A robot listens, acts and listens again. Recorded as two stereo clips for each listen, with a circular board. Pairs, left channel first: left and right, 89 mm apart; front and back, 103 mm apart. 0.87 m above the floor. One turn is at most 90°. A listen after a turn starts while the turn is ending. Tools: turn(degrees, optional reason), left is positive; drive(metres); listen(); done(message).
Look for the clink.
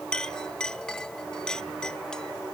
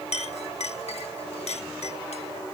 turn(degrees=10, reason="The clink: 10° left.")
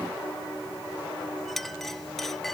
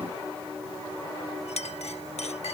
done("Facing the clink.")